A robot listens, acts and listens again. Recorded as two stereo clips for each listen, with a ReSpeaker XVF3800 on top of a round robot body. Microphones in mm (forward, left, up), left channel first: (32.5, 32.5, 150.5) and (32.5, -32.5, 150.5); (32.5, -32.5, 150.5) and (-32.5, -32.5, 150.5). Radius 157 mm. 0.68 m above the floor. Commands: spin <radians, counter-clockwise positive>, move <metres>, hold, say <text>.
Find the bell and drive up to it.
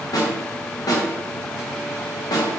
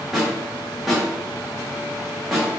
hold
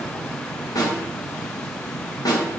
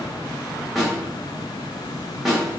hold
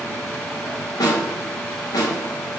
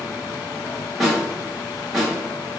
say I can't make out a bell, only a snare drum.